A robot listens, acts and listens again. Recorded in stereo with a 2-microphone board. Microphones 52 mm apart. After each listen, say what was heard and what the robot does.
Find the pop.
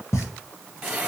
The pop: about 65° left or 115° left. Turn 65° left.
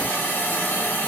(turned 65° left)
Keep listening.
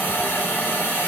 I heard a pop, but can't make it out now. It was about straight ahead or 50° left.